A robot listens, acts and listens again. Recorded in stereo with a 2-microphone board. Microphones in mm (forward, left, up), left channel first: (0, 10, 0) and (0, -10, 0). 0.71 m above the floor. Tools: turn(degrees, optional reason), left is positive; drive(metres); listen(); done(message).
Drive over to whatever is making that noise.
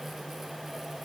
listen()
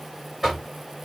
turn(degrees=-30)
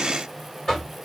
turn(degrees=25, reason="So it is at 25° left.")
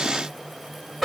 drive(metres=1.0)
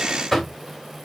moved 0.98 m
drive(metres=1.0)
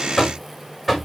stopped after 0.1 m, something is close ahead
done("Arrived at the knocking, straight ahead.")